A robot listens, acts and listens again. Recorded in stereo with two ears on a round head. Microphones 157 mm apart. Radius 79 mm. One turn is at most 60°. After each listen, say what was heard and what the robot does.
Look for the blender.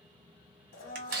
The blender: about 55° left or 125° left. Turn 55° left.
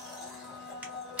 Facing the blender, under 1 m away.